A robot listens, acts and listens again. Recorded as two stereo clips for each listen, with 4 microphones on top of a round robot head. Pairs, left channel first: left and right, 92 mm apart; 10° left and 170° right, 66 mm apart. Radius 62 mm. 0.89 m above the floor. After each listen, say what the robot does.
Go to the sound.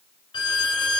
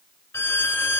Turn 55° left.
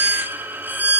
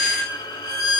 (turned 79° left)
Turn 20° right.
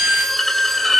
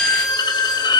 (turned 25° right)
Drive 1.0 m forward.
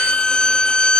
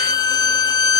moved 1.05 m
Turn 10° left.
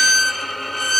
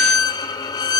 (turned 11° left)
Drive 1.0 m forward.
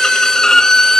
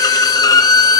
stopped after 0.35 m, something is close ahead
I am next to the violin.